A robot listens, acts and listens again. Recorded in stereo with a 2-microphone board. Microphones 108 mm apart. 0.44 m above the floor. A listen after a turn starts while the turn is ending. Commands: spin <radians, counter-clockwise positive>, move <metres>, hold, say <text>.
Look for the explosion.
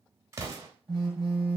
spin -0.52
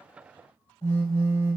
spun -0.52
hold
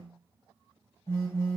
say I heard an explosion, but can't make it out now. It was about straight ahead or 120° right.